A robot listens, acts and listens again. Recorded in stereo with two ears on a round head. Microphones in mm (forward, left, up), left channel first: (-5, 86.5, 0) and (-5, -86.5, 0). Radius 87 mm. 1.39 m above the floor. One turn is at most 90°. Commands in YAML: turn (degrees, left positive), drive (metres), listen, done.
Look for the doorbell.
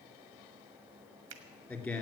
listen: true
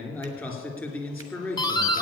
turn: 20
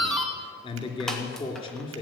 done: "Facing the doorbell, 1 to 2 m away."